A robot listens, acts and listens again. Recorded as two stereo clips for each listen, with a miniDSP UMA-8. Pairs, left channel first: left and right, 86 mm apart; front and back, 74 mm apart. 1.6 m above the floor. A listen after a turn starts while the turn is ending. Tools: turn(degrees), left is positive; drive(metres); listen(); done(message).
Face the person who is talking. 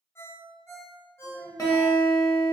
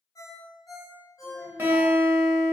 turn(degrees=-45)
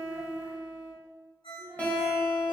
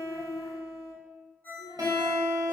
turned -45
listen()
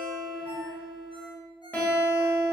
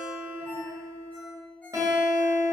listen()
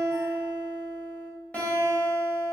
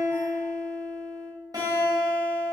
done("I heard a child speaking from this way, but can't make it out now.")